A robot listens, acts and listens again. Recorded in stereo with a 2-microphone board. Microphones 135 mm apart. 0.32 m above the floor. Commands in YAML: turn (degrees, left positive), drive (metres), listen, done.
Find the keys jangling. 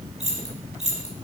turn: -55
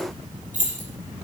turn: -70
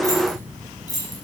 turn: 30
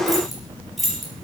done: "Facing the keys jangling."